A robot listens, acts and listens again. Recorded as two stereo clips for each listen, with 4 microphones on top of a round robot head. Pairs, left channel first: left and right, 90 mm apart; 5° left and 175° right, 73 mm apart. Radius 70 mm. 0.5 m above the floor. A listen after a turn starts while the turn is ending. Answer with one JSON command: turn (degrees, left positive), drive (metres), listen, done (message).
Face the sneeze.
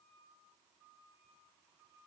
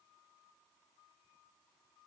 {"listen": true}
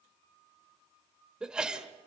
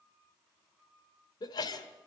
{"turn": -10}
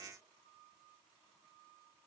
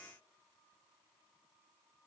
{"done": "I heard a sneeze from this way, but can't make it out now."}